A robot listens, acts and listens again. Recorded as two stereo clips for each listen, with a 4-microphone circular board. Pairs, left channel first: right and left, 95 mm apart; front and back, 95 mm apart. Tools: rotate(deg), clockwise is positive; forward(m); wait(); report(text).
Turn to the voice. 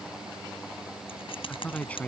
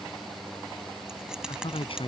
rotate(15)
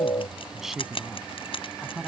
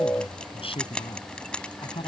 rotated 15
report("Found it: a man speaking, straight ahead.")